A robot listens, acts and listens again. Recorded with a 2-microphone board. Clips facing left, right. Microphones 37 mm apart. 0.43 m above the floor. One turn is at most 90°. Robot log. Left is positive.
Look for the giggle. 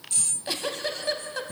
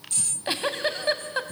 note: The giggle: about 30° right or 150° right.
cmd yaw -30
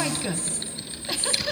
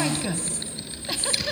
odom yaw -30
end: Facing the giggle, 1 to 2 m away.